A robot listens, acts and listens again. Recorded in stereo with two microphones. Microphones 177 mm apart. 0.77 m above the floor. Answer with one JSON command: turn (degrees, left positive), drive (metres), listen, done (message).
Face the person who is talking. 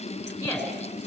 {"turn": 30}
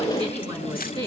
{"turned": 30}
{"turn": -30}
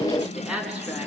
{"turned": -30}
{"done": "Facing the woman speaking."}